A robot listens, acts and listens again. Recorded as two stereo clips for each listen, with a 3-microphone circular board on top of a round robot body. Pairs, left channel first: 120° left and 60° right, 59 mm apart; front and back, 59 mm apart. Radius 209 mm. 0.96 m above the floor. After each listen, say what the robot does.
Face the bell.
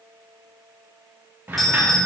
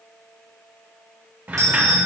Turn 150° right.
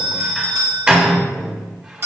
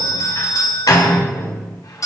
Turn 15° right.
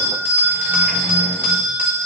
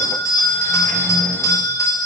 Found it: a bell, straight ahead.